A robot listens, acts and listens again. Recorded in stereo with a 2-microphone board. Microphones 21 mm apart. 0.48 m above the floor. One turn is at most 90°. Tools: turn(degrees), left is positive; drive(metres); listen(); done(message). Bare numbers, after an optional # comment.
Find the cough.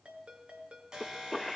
turn(30)
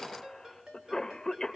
# So it is at 145° left.
turn(90)
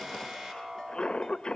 # The cough is now 75° left.
turn(75)
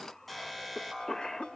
# The cough is now 30° left.
turn(30)
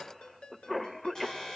done("Facing the cough.")